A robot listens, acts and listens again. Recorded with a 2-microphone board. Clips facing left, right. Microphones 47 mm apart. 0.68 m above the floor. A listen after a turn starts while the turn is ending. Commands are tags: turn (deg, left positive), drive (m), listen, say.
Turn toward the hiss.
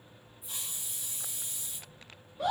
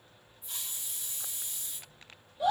<turn deg="30"/>
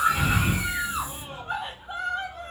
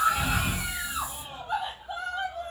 <listen/>
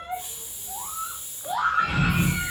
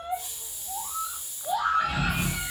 <turn deg="140"/>
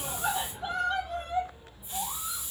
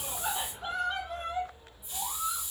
<turn deg="45"/>
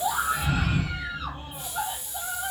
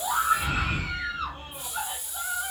<say>Found it: a hiss, straight ahead, 1 to 2 m away.</say>